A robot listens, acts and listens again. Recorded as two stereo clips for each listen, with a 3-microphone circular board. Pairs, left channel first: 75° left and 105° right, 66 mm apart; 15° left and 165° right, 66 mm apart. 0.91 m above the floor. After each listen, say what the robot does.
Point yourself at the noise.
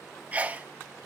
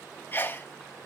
Turn 40° right.
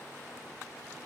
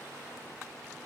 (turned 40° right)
Facing where the sneeze came from. I can't hear it now.